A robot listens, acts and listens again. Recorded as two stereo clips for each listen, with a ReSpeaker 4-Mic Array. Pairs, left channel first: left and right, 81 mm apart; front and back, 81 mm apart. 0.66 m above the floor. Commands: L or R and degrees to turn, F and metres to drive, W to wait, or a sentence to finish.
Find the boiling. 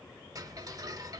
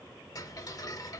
W
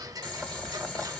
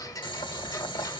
L10
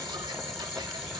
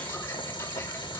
Facing the boiling, 1 to 2 m away.